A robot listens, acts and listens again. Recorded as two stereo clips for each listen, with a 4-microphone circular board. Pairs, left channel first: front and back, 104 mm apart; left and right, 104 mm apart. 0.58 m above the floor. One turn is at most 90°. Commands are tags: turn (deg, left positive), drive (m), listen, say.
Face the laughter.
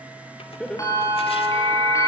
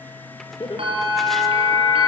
<turn deg="80"/>
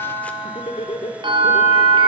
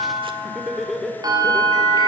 <say>Facing the laughter.</say>